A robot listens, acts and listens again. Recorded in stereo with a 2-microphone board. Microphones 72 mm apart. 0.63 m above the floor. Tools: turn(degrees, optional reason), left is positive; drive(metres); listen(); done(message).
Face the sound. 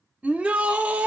turn(degrees=-15, reason="The shout: about 15° right or 165° right.")
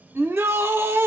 turn(degrees=-150, reason="So it is at 150° right.")
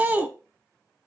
turn(degrees=-35, reason="The shout is now 35° right.")
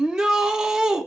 turn(degrees=-15, reason="The shout is now 15° right.")
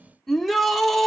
done("Facing the shout, 1 to 2 m away.")